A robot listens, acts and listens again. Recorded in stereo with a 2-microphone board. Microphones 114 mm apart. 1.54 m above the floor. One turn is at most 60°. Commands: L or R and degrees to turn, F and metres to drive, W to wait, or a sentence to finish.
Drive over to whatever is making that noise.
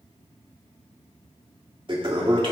R45
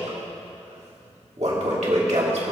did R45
R60
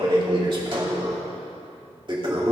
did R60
R45
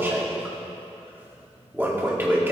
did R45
R20
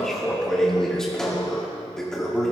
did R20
F1.0
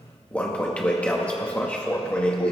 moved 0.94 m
L10
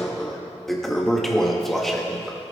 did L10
F1.0
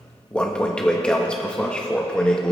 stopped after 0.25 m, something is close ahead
L10
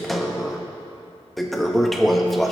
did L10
Arrived at the toilet flushing, straight ahead.